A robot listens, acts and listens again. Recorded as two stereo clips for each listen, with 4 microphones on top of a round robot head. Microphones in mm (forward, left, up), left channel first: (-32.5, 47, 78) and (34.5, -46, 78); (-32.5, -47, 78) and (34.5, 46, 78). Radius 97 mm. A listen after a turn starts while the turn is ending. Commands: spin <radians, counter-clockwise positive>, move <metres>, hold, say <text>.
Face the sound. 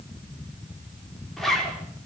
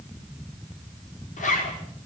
spin -2.53
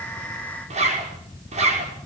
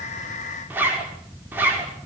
spin -0.35
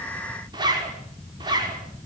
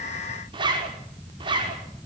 say Facing the zipper.